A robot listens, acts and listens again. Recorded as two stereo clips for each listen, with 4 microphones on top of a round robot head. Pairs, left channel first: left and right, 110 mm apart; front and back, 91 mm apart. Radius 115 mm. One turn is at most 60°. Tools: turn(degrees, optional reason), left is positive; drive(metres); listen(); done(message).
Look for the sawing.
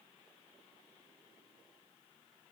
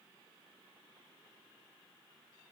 listen()
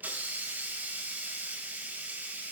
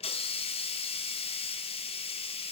listen()
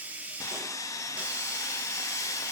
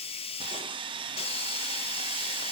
turn(degrees=60, reason="The sawing: 150° left.")
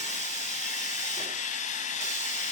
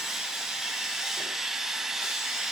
turn(degrees=60, reason="The sawing is now 95° left.")
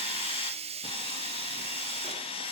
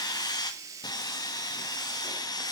turn(degrees=45, reason="The sawing is now 45° left.")
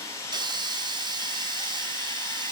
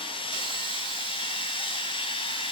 turn(degrees=25, reason="The sawing is now 25° left.")
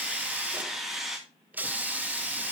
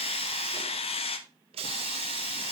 done("Found it: sawing, straight ahead.")